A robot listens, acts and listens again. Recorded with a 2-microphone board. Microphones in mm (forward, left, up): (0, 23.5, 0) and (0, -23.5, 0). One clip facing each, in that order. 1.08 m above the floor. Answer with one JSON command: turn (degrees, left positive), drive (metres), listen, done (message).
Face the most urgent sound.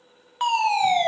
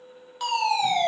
{"turn": 35}
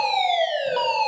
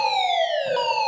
{"done": "Facing the fire alarm."}